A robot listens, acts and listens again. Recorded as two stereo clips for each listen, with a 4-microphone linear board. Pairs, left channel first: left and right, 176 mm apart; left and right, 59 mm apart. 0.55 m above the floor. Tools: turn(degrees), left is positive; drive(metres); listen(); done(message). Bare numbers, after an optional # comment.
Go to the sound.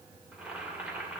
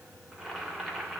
turn(-30)
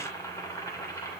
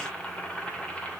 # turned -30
# So it is at 20° left.
turn(20)
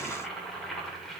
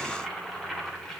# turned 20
drive(1.0)
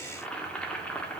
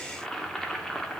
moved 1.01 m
# The boiling is now 10° left.
turn(10)
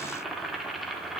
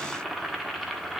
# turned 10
drive(1.0)
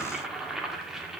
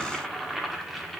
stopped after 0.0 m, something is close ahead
done("Arrived at the boiling, straight ahead.")